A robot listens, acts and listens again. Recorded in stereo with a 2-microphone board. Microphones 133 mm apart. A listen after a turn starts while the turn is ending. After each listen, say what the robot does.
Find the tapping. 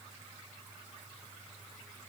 Keep listening.
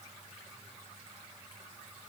Keep listening.
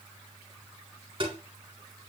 Turn 45° right.
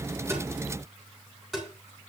Found it: tapping, straight ahead.